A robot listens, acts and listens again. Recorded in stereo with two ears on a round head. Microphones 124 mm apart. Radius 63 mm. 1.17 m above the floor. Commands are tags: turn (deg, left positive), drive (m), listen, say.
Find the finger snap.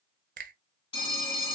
<turn deg="-65"/>
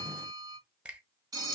<turn deg="-10"/>
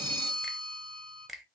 <say>Facing the finger snap, under 1 m away.</say>